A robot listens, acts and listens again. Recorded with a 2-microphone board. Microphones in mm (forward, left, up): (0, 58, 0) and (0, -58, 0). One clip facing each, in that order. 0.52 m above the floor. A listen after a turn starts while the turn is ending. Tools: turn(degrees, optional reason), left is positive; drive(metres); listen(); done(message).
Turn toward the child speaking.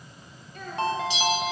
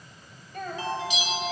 turn(degrees=-55, reason="The child speaking: about 55° right or 125° right.")
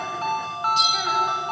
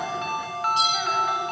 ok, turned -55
listen()
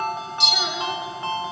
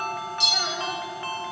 listen()
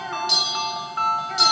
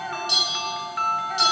done("I heard a child speaking, but can't make it out now. It was about straight ahead or 70° right.")